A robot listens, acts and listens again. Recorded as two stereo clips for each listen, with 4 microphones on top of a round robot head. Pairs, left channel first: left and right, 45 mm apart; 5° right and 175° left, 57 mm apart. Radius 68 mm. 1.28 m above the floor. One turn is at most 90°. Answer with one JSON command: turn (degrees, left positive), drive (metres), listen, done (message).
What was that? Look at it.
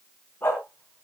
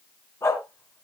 {"turn": 30}
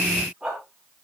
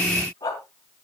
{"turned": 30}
{"turn": -15}
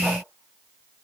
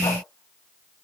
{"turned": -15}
{"listen": true}
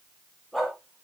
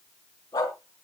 {"done": "Found it: a dog barking, straight ahead."}